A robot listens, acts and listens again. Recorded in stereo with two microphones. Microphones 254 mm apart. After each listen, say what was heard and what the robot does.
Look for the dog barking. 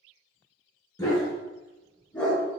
Turn 30° left.
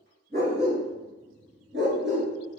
So it is at 50° right. Turn 50° right.
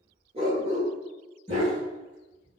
The dog barking is now 30° right. Turn 30° right.
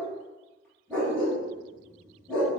Found it: a dog barking, straight ahead.